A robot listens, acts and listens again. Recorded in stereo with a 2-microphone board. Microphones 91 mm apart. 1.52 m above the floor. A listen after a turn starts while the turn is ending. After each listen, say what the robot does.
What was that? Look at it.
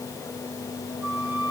Turn 30° right.
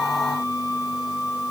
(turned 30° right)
Turn 115° right.
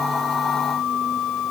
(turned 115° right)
Found it: a flute, straight ahead, over 4 m away.